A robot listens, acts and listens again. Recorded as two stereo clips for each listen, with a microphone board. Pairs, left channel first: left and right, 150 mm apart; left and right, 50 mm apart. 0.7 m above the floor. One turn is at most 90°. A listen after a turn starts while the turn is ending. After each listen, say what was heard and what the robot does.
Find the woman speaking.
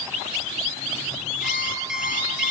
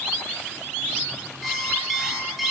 Keep listening.
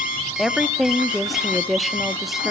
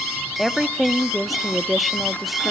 Turn 30° left.
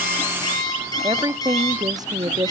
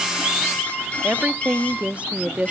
So it is at 35° right. Turn 35° right.
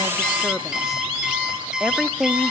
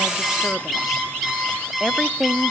Found it: a woman speaking, straight ahead.